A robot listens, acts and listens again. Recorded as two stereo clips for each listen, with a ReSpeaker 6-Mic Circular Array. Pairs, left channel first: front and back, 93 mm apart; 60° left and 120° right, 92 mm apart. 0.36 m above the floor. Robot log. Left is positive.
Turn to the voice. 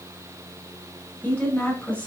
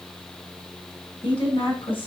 note: The woman speaking: 70° left.
cmd yaw +70
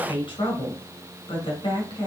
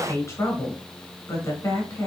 end: Found it: a woman speaking, straight ahead, 2 to 4 m away.